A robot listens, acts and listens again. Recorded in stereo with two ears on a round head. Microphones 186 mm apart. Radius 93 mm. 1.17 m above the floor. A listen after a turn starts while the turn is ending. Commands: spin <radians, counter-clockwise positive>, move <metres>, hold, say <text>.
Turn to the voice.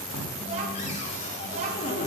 spin -0.61
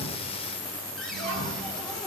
spin -1.92
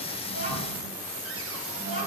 spin -0.61
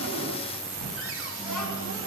say Found it: a child speaking, straight ahead, over 4 m away.